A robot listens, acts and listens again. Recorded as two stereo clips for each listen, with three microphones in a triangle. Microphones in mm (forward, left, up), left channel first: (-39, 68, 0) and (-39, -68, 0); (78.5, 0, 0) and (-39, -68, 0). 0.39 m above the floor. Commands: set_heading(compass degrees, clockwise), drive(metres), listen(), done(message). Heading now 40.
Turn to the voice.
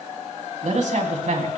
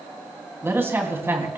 set_heading(120)
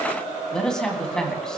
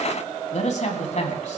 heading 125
done("Facing the man speaking, 2 to 4 m away.")